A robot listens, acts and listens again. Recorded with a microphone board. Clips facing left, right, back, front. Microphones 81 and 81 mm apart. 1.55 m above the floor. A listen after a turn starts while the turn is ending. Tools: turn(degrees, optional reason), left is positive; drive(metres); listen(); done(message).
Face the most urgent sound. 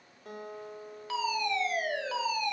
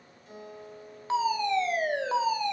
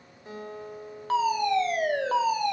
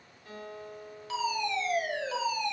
turn(degrees=-145, reason="The fire alarm: 145° right.")
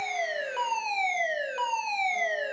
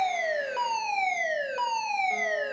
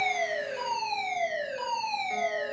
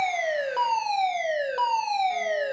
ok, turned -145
done("Facing the fire alarm, 2 to 4 m away.")